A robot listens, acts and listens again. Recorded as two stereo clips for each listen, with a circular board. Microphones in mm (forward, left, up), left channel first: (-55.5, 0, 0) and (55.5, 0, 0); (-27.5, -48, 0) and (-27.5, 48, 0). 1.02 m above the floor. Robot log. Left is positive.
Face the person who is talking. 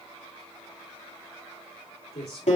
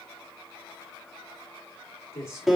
note: The man speaking: 150° right.
cmd yaw -150
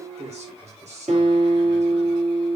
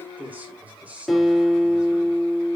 note: The man speaking is now 15° left.
cmd yaw +15
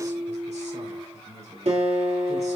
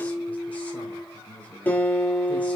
note: The man speaking is now 15° right.
cmd yaw -15
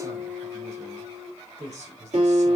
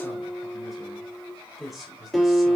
end: Found it: a man speaking, straight ahead, 2 to 4 m away.